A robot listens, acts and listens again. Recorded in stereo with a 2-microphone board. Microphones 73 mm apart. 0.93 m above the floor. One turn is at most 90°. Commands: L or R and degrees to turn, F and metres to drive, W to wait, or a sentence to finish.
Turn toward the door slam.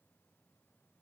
W
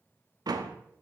R65
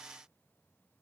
W
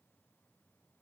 I heard a door slam, but can't make it out now. It was about straight ahead or 50° right.